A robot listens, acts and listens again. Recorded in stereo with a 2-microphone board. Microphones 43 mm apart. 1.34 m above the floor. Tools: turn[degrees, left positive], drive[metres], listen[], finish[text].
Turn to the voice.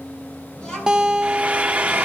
Thought: The child speaking: about 20° left or 160° left.
Action: turn[20]
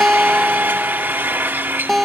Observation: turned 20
Action: listen[]
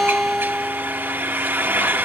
Action: listen[]
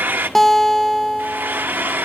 Action: finish[I heard a child speaking, but can't make it out now. It was about straight ahead or 140° left.]